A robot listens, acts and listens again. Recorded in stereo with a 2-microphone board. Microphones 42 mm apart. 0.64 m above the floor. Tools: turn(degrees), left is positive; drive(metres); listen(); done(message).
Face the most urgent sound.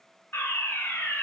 turn(degrees=65)
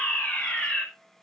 turn(degrees=40)
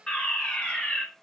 turn(degrees=30)
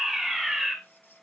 turn(degrees=-10)
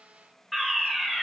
done("Facing the fire alarm, over 4 m away.")